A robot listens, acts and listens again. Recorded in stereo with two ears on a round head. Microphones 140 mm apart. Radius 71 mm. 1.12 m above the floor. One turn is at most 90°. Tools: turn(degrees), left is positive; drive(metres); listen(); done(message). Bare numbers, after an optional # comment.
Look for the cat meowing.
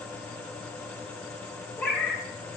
turn(30)
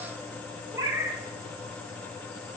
# So it is at 20° right.
turn(-20)
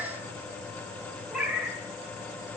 done("Facing the cat meowing.")